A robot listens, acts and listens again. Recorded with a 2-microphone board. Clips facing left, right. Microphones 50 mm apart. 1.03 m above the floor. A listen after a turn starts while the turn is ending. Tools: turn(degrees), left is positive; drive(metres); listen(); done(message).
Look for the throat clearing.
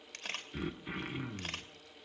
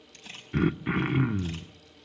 turn(degrees=-45)
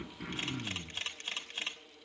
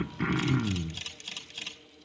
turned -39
turn(degrees=-80)
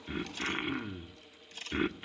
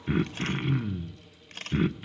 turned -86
done("Facing the throat clearing, under 1 m away.")